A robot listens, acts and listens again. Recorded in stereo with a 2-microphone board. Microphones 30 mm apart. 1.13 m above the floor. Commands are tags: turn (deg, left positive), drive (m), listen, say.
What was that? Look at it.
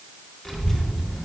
<turn deg="20"/>
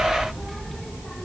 <turn deg="30"/>
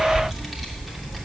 <say>Found it: a child speaking, straight ahead.</say>